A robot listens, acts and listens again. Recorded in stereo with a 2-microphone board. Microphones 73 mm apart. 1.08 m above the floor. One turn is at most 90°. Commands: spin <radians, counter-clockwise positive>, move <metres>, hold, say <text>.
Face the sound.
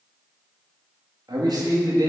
spin -1.05
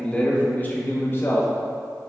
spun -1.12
spin 0.61
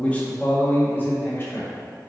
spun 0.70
spin 0.52
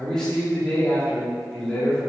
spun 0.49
spin 0.17
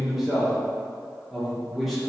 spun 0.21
say Facing the man speaking, 2 to 4 m away.